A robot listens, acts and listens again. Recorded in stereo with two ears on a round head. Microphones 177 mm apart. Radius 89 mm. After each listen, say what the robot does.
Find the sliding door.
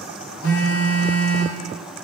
Keep listening.
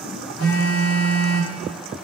Keep listening.
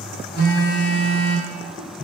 I can't make out a sliding door, only a phone buzzing.